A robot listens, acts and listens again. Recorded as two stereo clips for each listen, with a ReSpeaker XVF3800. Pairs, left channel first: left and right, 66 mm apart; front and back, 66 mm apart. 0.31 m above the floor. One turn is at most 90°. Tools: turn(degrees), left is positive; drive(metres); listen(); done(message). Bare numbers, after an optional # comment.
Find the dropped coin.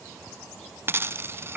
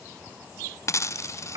# The dropped coin: 40° right.
turn(-40)
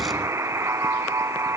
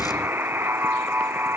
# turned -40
done("Facing where the dropped coin came from. I can't hear it now.")